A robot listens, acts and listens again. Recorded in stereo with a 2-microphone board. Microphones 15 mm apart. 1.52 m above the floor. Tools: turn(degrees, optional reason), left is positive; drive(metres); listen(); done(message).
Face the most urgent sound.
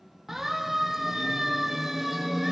turn(degrees=-25, reason="The siren: about 25° right or 155° right.")
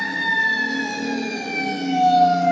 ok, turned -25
done("Found it: a siren, straight ahead, 2 to 4 m away.")